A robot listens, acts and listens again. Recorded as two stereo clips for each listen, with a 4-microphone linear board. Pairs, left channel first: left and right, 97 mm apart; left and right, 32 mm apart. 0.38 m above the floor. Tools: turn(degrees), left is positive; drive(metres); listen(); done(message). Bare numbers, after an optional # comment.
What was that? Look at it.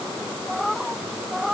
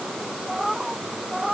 turn(-30)
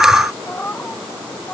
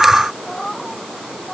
# So it is at 15° left.
turn(15)
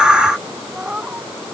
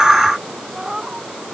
# The cat meowing is now 10° right.
turn(-10)
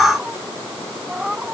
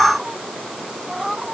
done("Found it: a cat meowing, straight ahead.")